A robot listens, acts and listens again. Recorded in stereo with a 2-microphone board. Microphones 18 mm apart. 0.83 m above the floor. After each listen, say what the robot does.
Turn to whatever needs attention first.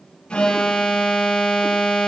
Turn 70° left.
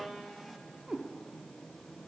Keep listening.
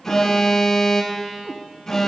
Turn 30° left.
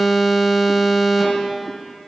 Found it: an alarm, straight ahead, 1 to 2 m away.